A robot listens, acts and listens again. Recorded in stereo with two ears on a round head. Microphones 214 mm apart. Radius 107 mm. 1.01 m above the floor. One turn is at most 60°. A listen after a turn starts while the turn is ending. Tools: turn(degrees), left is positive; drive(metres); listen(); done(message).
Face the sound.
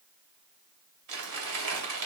turn(degrees=-60)
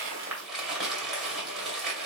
done("Facing the crumpling, 2 to 4 m away.")